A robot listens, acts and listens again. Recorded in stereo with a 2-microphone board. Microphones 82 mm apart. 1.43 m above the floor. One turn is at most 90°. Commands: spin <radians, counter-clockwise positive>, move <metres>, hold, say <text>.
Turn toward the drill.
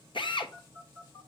spin 1.22
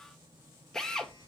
say Found it: a drill, straight ahead, 1 to 2 m away.